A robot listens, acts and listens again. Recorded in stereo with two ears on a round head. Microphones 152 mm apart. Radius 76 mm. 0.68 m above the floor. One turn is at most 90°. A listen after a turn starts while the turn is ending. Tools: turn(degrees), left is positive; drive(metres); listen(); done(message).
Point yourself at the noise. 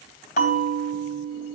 turn(degrees=50)
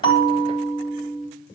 done("Found it: a bell, straight ahead, 2 to 4 m away.")